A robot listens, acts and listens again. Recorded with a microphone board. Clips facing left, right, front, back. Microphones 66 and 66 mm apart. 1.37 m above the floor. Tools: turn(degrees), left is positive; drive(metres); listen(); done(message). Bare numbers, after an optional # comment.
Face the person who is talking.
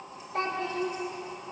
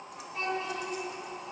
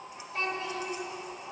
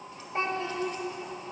# The child speaking: 120° left.
turn(120)
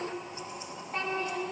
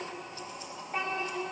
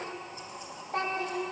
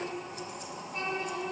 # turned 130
# The child speaking is now 10° right.
turn(-10)
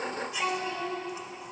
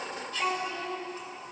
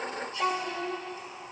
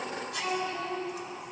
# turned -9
done("Found it: a child speaking, straight ahead.")